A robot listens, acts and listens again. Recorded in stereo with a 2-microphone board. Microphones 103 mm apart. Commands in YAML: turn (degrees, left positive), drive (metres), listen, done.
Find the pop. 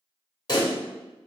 turn: 45
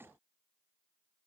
listen: true
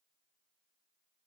done: "I heard a pop, but can't make it out now. It was about straight ahead or 90° left."